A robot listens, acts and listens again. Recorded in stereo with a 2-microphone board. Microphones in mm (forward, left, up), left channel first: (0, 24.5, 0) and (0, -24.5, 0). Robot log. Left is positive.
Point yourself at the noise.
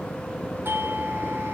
note: The doorbell: about 50° right or 130° right.
cmd yaw -50
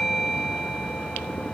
end: Facing the doorbell, 1 to 2 m away.